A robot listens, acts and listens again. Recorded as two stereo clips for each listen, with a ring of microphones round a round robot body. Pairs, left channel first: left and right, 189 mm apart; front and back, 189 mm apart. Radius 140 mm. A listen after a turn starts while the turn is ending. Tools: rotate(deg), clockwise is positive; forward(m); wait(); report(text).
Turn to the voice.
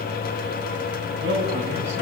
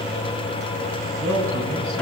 rotate(160)
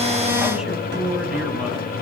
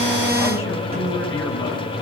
report("Found it: a man speaking, straight ahead, over 4 m away.")